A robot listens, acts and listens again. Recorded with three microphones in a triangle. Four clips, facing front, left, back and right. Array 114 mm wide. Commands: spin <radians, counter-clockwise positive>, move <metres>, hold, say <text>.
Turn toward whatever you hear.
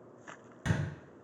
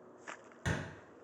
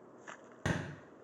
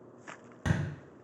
spin -2.79
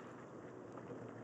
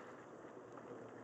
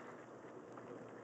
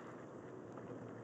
say Facing where the thud came from. I can't hear it now.